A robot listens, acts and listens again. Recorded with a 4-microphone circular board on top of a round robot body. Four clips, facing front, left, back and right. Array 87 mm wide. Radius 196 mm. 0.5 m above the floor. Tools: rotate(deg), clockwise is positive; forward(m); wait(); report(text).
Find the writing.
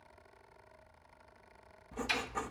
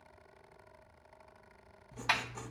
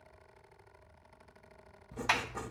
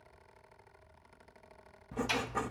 rotate(80)
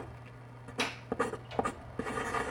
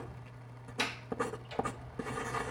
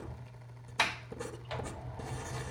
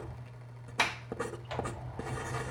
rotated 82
report("Facing the writing.")